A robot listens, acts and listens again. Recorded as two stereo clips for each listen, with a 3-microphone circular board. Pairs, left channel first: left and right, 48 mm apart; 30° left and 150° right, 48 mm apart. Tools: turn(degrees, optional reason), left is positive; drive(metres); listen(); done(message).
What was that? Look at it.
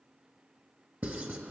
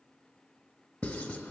turn(degrees=-35, reason="The writing: 35° right.")
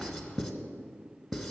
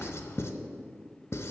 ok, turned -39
done("Found it: writing, straight ahead.")